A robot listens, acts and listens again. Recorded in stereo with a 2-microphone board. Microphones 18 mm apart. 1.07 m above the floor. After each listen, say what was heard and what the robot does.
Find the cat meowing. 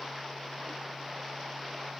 Keep listening.
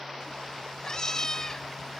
The cat meowing: about 30° left or 150° left. Turn 30° left.
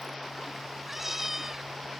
So it is at 20° right. Turn 20° right.
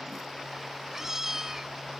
The cat meowing is now 25° right. Turn 25° right.
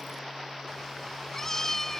The cat meowing is now 20° left. Turn 20° left.
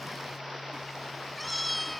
Facing the cat meowing.